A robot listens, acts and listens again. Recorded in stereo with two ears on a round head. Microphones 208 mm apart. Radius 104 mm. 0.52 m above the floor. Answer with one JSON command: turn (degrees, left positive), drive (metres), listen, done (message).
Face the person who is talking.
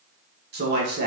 {"turn": -45}
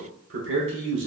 {"turn": -75}
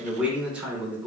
{"done": "Found it: a man speaking, straight ahead."}